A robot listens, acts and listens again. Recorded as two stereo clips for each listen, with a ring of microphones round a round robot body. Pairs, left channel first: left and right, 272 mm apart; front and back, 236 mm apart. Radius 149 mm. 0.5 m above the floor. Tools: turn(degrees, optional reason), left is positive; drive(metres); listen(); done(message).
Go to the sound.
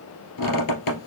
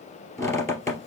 turn(degrees=80, reason="The squeak: 80° left.")
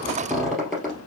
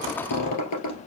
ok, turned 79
drive(metres=1.0)
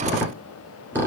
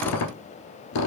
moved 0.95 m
turn(degrees=-10, reason="The squeak is now 10° right.")
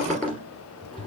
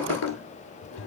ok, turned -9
drive(metres=1.0)
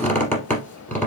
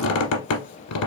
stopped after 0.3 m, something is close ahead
done("I am next to the squeak.")